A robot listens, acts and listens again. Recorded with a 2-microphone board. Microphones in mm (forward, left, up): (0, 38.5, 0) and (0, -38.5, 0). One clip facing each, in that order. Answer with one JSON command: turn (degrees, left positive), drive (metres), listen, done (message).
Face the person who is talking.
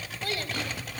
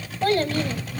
{"turn": -55}
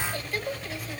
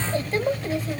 {"turn": -40}
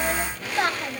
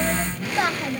{"done": "Found it: a child speaking, straight ahead, 1 to 2 m away."}